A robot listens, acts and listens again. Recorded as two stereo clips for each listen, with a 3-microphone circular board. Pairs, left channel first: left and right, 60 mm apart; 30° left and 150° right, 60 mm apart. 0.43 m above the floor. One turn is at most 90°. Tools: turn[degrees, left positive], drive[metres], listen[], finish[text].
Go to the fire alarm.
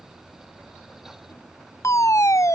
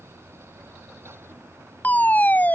Thought: The fire alarm: 85° left.
Action: turn[85]
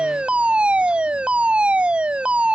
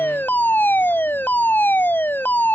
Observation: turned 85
Thought: The fire alarm is now 20° right.
Action: turn[-20]
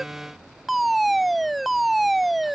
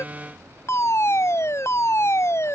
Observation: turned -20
Action: drive[1.0]
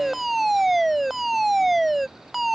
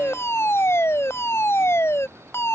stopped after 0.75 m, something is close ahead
Action: finish[Blocked. The fire alarm is further on, straight ahead.]